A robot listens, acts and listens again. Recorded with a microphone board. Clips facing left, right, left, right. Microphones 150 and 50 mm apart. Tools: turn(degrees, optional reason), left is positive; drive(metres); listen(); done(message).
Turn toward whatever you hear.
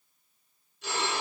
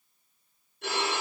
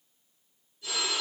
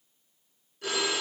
turn(degrees=-65, reason="The phone ringing: about 65° right or 115° right.")
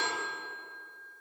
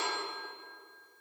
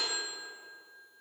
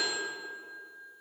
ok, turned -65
turn(degrees=-50, reason="So it is at 50° right.")
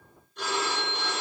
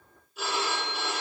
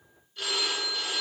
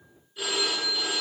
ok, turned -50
done("Found it: a phone ringing, straight ahead, 2 to 4 m away.")